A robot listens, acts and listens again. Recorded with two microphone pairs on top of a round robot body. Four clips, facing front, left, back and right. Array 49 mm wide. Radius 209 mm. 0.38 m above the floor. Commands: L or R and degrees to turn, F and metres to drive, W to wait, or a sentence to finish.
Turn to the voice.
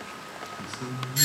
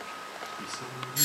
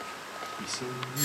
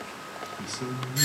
R130
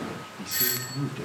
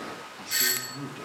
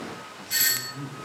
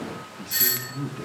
L40
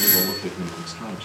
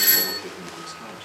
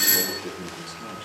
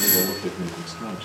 R15
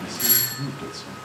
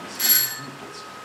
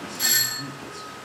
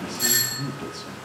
Found it: a man speaking, straight ahead.